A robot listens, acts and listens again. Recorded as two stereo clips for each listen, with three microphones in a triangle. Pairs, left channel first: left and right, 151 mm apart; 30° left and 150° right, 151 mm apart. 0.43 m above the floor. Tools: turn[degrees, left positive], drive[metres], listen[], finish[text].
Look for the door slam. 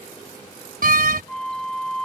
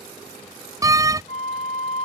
Thought: The door slam: 85° right.
Action: turn[-85]
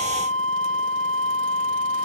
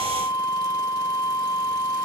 Action: finish[I heard a door slam from this way, but can't make it out now.]